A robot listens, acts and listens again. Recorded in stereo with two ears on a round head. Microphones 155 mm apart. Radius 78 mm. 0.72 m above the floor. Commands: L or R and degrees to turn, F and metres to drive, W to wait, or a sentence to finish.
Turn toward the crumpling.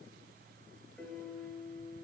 W
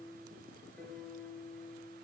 W
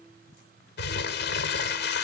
L70
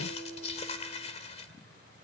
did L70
L35
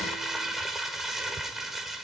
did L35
Facing the crumpling, 1 to 2 m away.